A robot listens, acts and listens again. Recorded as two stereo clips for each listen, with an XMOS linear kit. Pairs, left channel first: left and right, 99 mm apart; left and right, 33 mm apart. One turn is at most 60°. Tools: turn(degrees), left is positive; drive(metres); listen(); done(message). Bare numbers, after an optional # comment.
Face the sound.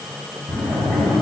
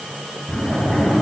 turn(30)
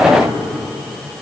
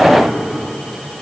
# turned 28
listen()
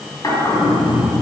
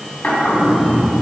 # So it is at 140° left.
turn(60)
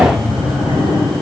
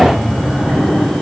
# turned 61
# The drawer is now 80° left.
turn(60)
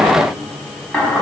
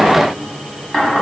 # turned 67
# The drawer is now 15° left.
turn(15)
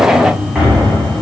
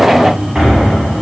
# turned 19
done("Facing the drawer.")